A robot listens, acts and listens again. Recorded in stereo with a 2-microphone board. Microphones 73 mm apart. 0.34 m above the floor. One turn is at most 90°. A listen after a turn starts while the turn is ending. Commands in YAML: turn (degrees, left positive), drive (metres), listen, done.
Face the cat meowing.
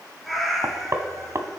turn: 30
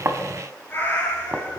turn: 90
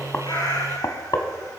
turn: 65
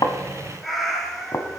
done: "Facing the cat meowing."